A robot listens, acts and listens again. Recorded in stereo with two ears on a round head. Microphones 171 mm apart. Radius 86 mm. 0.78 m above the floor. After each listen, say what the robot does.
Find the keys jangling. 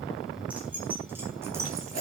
Turn 20° right.
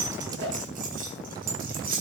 Turn 130° right.
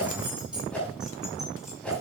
Facing the keys jangling.